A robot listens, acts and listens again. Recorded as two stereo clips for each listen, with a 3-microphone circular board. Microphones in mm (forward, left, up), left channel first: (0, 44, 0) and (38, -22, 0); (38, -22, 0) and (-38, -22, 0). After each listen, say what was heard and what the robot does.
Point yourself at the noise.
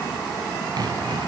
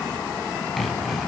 The sawing: 90° right. Turn 90° right.
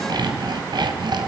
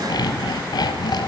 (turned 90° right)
The sawing is now 35° right. Turn 35° right.
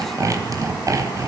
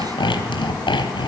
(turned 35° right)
The sawing is now 10° right. Turn 10° right.
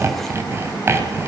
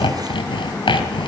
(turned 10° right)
Found it: sawing, straight ahead, 2 to 4 m away.